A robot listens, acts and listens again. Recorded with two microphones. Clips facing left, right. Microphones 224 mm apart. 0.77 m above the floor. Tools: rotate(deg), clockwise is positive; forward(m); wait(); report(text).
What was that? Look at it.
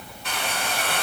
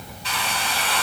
rotate(-55)
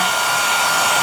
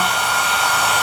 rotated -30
rotate(-95)
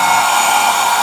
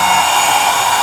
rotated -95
report("Facing the hair dryer, 2 to 4 m away.")